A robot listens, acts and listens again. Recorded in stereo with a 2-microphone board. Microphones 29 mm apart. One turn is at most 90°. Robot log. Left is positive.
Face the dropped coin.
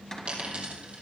note: The dropped coin: about 45° right or 135° right.
cmd yaw -45
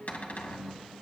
cmd idle
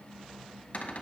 end: I heard a dropped coin, but can't make it out now. It was about straight ahead or 90° right.